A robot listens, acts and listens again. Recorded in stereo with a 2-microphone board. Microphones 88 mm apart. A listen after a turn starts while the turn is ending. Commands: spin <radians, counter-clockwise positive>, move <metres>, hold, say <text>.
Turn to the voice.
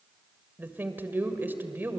spin -0.35
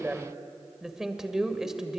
say Facing the woman speaking, 2 to 4 m away.